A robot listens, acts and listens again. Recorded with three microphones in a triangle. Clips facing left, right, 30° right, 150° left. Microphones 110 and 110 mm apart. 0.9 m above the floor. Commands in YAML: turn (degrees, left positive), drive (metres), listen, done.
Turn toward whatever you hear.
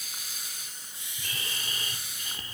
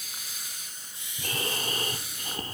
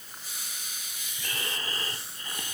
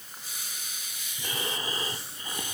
turn: -135
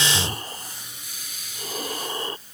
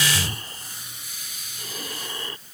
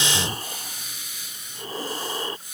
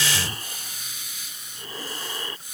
turn: 35
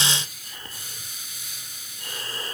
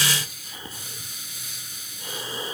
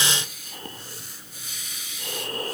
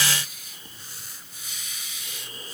turn: -10
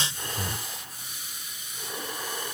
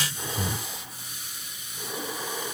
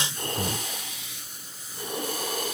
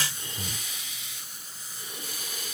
done: "Facing the breathing."